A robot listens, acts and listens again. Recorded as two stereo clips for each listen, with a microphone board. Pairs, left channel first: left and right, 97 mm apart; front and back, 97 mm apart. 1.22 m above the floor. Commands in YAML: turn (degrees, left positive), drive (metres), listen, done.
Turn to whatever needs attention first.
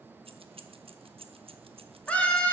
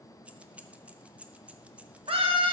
turn: 165
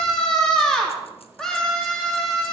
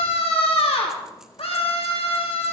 done: "Found it: a scream, straight ahead, 2 to 4 m away."